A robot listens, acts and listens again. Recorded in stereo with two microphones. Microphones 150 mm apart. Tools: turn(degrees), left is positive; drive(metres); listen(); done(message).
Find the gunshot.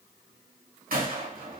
turn(degrees=-70)
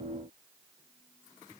listen()
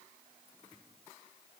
done("I heard a gunshot, but can't make it out now. It was about straight ahead or 40° right.")